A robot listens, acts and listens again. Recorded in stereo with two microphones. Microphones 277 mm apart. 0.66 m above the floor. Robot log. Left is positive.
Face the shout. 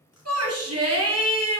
note: The shout: about 60° right or 120° right.
cmd yaw -60
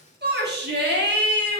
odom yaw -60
note: So it is at 45° right.
cmd yaw -45
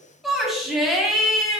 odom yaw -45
end: Found it: a shout, straight ahead.